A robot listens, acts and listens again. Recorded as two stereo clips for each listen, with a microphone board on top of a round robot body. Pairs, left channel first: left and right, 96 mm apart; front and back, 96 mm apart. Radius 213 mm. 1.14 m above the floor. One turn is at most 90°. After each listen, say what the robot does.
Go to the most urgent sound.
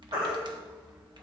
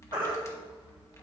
Turn 90° right.
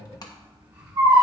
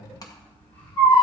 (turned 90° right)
Turn 35° right.
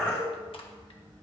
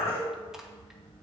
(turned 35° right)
Turn 15° left.
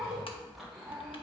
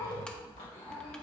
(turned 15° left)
Drive 1.0 m forward.
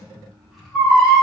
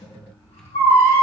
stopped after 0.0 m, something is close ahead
Something is in my way. I am facing the baby crying but have not reached it.